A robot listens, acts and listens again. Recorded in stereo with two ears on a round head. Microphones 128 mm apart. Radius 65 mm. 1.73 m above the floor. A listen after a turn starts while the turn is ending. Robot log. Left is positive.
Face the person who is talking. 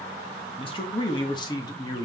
note: The man speaking: about 25° left or 155° left.
cmd yaw +25
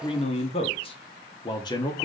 note: The man speaking: about 25° left or 155° left.
cmd yaw +25
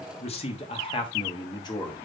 note: The man speaking: about 30° left or 150° left.
cmd yaw +30
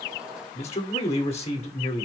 note: So it is at 135° left.
cmd yaw +135
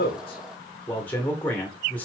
note: The man speaking is now 10° left.
cmd yaw +10
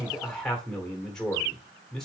end: Found it: a man speaking, straight ahead, 1 to 2 m away.